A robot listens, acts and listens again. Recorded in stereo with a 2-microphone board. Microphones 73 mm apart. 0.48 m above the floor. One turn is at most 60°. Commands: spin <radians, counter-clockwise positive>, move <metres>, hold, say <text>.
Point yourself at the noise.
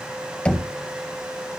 spin 0.26
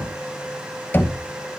spin 1.05
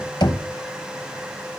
spin 1.05
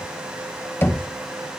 spin 0.61
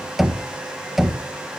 say Found it: knocking, straight ahead.